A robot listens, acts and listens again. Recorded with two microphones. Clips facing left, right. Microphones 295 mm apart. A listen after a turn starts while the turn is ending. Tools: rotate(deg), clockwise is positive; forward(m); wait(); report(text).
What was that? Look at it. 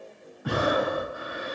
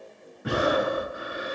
rotate(30)
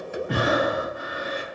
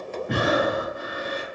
rotate(120)
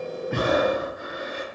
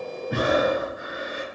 rotate(25)
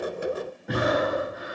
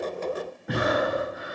report("Facing the breathing, 1 to 2 m away.")